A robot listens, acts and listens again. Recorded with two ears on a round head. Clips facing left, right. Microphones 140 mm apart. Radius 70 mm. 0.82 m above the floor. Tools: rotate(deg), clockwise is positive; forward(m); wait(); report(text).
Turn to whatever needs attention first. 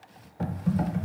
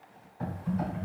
wait()
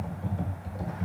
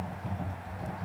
wait()
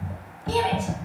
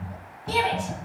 rotate(30)
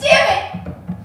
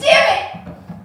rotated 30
report("Facing the shout, 1 to 2 m away.")